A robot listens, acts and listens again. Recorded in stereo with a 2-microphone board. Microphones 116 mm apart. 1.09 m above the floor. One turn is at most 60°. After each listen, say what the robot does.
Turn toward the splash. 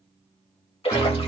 Turn 50° left.
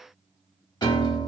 Keep listening.
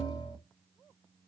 I heard a splash, but can't make it out now. It was about straight ahead or 80° left.